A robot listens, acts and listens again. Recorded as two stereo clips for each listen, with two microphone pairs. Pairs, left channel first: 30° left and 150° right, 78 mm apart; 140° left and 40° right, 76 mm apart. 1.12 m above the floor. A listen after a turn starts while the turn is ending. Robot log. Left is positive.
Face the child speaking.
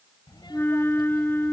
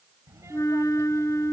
note: The child speaking: 10° left.
cmd yaw +10
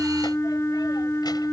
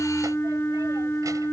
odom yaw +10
cmd idle
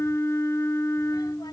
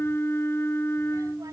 cmd idle
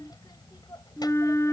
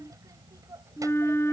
end: Facing the child speaking.